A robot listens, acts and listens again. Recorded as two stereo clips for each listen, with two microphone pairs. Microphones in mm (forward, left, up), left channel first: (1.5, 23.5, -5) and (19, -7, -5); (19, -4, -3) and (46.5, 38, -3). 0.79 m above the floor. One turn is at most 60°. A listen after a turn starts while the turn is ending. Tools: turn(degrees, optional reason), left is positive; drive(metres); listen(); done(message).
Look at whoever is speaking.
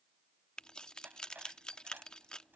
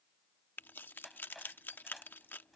listen()
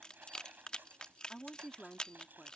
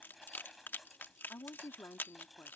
turn(degrees=-60, reason="The woman speaking: 165° right.")
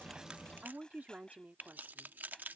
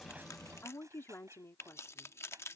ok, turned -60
turn(degrees=-60, reason="The woman speaking is now 100° right.")
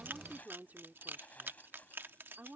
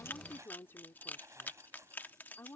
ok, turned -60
turn(degrees=-60, reason="The woman speaking is now 80° right.")
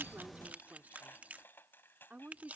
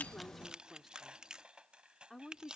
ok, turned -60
turn(degrees=-30, reason="The woman speaking is now 30° right.")
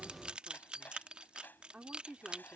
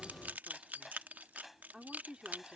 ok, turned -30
turn(degrees=-15, reason="The woman speaking is now 15° right.")
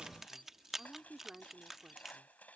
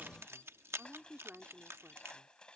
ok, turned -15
done("Facing the woman speaking.")